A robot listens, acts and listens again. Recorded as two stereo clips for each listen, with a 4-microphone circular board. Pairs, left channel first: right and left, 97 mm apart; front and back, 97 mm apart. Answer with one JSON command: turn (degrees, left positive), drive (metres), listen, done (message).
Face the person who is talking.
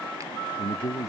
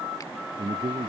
{"turn": -145}
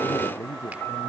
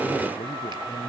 {"turn": -25}
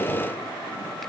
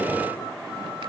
{"listen": true}
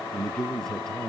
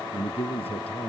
{"done": "Facing the man speaking."}